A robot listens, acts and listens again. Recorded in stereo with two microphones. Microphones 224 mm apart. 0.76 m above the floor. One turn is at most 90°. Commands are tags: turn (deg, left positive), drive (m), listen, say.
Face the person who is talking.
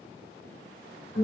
<listen/>
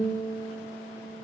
<listen/>
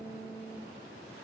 <say>I can't make out anyone speaking, only a guitar.</say>